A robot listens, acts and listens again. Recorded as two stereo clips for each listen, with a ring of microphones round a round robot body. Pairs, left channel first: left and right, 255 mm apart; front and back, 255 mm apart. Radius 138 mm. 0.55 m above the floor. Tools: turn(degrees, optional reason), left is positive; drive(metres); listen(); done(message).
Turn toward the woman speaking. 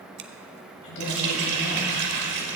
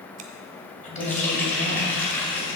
turn(degrees=60, reason="The woman speaking: 60° left.")
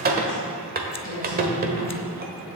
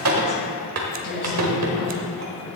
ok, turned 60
turn(degrees=15, reason="The woman speaking is now 15° left.")
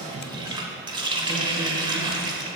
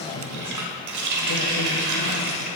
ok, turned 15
done("Found it: a woman speaking, straight ahead, over 4 m away.")